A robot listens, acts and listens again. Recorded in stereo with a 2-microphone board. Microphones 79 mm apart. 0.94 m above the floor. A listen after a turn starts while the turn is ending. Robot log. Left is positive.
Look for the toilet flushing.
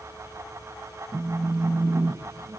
cmd idle
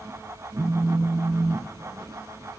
cmd idle
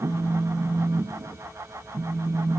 end: I can't make out a toilet flushing to turn to.